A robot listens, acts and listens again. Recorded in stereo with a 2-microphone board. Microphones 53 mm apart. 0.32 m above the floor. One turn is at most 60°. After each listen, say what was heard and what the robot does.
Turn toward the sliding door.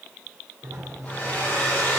Turn 60° right.
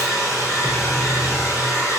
Nothing new. It was at 30° right. Turn 30° right.
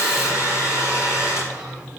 The sliding door is now 20° right. Turn 20° right.
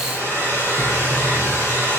Keep listening.
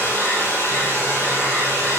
Keep listening.
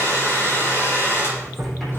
Found it: a sliding door, straight ahead, 2 to 4 m away.